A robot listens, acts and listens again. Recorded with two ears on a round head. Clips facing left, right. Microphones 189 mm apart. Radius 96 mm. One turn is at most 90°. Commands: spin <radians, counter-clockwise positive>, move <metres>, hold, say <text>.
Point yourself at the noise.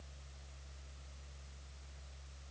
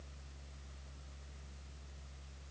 hold
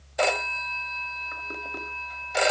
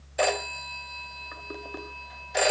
spin 0.52
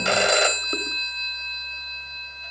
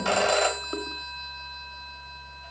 spin 1.57
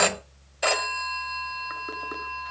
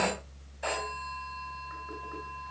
spin 1.40
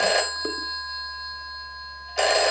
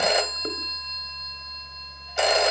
say Facing the phone ringing, 1 to 2 m away.